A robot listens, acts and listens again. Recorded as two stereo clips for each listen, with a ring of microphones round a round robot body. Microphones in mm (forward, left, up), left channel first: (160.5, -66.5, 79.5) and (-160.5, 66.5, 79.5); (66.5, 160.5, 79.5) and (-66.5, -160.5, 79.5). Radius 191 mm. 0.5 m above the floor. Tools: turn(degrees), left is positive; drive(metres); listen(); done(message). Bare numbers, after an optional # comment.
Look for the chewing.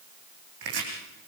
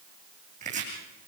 listen()
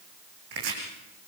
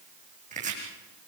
listen()
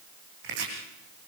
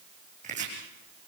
done("I can't make out chewing to turn to.")